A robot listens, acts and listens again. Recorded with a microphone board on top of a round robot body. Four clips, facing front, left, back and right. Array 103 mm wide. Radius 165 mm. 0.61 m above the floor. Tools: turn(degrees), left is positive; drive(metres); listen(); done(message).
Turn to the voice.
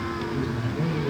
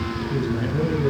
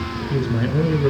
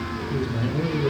turn(degrees=170)
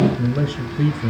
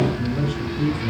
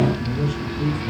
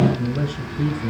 turn(degrees=-20)
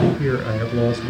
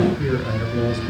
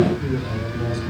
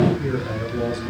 done("Found it: a man speaking, straight ahead, 2 to 4 m away.")